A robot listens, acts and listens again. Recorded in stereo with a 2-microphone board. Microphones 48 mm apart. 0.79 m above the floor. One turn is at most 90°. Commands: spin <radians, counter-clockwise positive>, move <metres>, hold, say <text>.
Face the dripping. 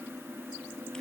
hold
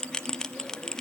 hold
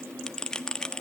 say I can't make out dripping to turn to.